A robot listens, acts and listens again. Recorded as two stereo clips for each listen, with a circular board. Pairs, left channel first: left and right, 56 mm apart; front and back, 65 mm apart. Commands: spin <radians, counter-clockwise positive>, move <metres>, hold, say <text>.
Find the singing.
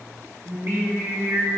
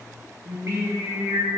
spin -2.44
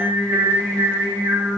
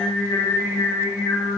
spin -0.44
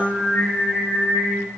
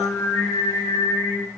spin 0.35
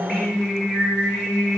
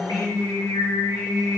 say Facing the singing.